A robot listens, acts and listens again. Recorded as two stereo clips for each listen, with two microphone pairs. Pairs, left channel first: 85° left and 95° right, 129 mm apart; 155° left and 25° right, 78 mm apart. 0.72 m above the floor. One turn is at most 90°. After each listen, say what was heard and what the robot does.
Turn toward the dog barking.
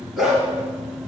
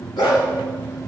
The dog barking: straight behind. Turn 90° left.
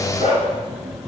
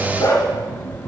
The dog barking is now 115° left. Turn 90° left.
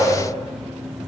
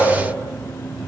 Nothing new. It was at 25° left. Turn 25° left.
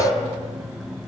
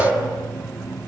Keep listening.
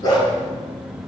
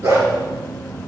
The dog barking is now 25° left. Turn 25° left.
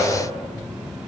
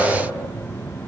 Keep listening.
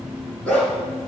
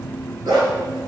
Facing the dog barking, 2 to 4 m away.